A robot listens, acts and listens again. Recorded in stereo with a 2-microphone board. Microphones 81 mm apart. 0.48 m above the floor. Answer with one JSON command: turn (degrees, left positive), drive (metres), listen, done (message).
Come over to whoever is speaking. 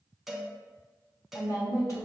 {"turn": 50}
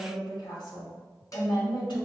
{"turn": 80}
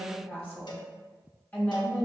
{"turn": 20}
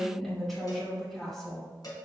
{"drive": 1.0}
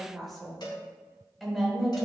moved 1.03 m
{"drive": 1.0}
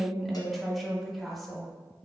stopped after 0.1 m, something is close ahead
{"done": "Arrived at the woman speaking, straight ahead."}